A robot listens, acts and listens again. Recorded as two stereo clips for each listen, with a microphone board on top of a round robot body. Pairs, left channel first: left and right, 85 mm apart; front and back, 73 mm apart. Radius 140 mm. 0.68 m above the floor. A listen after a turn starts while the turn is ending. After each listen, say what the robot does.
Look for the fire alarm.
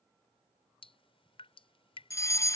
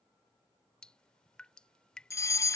Turn 40° left.
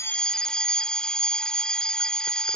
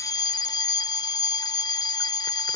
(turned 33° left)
Turn 10° left.
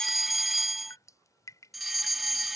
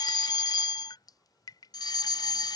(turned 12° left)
Found it: a fire alarm, straight ahead.